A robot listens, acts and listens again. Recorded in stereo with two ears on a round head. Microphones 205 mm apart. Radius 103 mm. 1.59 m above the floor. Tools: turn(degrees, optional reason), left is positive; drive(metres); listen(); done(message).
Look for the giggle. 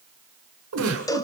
turn(degrees=-90)
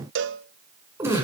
turn(degrees=-15, reason="So it is at 15° right.")
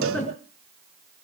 done("Found it: a giggle, straight ahead.")